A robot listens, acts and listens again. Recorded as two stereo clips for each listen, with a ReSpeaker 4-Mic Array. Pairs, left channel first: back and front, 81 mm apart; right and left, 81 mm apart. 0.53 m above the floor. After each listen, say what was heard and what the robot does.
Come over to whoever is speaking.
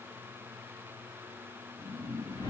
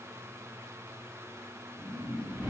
Keep listening.
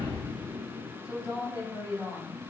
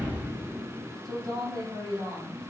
The woman speaking: 125° left. Turn 125° left.
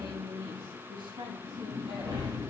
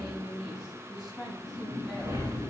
Drive 1.0 m forward.
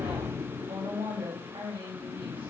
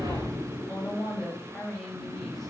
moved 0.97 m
Drive 1.0 m forward.
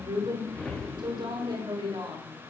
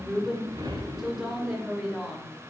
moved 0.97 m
Drive 1.0 m forward.
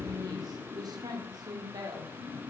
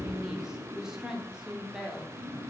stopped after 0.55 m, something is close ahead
The woman speaking is now 10° left. Turn 10° left.
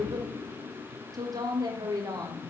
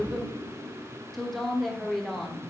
I am next to the woman speaking.